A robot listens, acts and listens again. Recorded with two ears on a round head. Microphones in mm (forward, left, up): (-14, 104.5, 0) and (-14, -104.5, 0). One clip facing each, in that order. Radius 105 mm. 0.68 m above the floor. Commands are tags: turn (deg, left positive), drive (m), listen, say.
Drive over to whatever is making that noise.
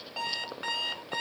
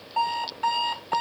<turn deg="20"/>
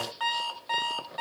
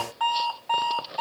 <turn deg="145"/>
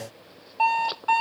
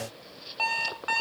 <turn deg="-25"/>
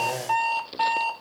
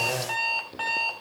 <drive m="1.0"/>
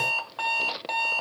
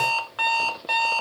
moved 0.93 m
<turn deg="-20"/>
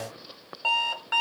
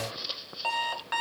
<drive m="1.0"/>
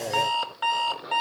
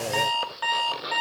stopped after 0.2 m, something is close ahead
<say>I am next to the alarm clock.</say>